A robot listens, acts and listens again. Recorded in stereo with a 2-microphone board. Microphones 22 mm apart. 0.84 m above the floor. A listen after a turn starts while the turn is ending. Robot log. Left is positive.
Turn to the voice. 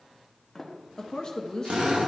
note: The woman speaking: about 35° left or 145° left.
cmd yaw +35
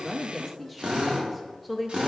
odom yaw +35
end: Found it: a woman speaking, straight ahead, under 1 m away.